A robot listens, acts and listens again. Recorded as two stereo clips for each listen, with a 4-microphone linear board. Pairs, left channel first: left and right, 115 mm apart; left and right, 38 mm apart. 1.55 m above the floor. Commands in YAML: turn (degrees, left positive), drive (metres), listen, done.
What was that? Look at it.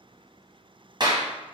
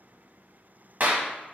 turn: -40
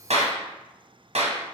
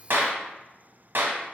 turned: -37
turn: -100
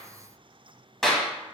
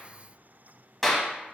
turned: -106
done: "Facing the clap."